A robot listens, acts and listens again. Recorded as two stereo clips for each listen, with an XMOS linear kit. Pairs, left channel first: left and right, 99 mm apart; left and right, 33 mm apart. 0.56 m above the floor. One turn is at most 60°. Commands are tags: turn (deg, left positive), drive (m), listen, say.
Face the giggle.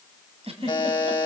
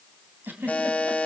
<turn deg="-60"/>
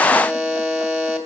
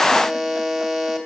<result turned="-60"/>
<listen/>
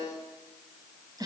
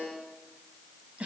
<turn deg="-40"/>
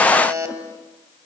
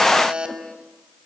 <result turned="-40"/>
<listen/>
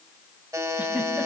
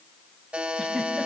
<listen/>
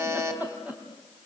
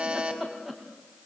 <turn deg="-15"/>
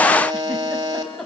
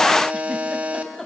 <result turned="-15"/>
<say>Found it: a giggle, straight ahead, 2 to 4 m away.</say>